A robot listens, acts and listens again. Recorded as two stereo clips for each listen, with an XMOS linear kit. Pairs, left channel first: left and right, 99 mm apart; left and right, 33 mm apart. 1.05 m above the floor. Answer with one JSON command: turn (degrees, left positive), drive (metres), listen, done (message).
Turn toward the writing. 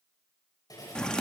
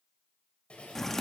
{"turn": 40}
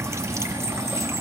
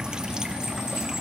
{"listen": true}
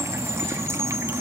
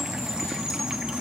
{"listen": true}
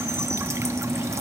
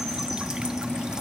{"done": "I heard writing, but can't make it out now. It was about straight ahead or 100° left."}